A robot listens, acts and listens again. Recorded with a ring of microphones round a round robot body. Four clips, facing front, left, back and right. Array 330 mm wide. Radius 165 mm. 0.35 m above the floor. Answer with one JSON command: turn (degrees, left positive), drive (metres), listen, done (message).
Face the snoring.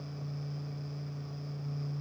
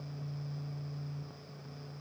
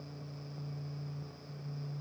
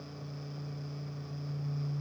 {"listen": true}
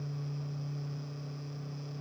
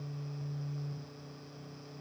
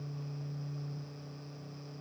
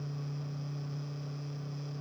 {"listen": true}
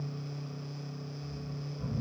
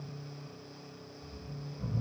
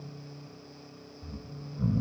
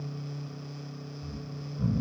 {"turn": -140}
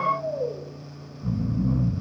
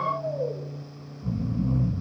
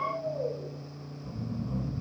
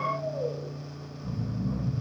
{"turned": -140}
{"turn": 15}
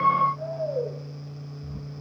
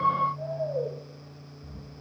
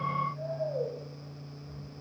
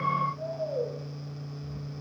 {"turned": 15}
{"done": "Facing the snoring, 2 to 4 m away."}